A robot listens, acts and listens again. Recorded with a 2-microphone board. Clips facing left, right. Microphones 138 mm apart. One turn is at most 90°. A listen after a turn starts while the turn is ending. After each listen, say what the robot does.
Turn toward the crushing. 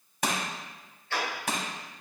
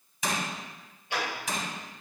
Turn 65° left.
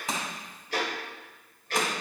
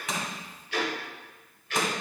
Keep listening.
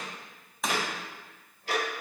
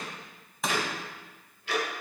Found it: crushing, straight ahead.